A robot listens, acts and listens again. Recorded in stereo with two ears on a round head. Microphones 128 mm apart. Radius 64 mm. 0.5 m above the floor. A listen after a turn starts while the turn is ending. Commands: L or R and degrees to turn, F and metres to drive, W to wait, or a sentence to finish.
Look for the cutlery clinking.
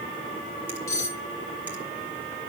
L20
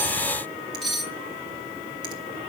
Facing the cutlery clinking.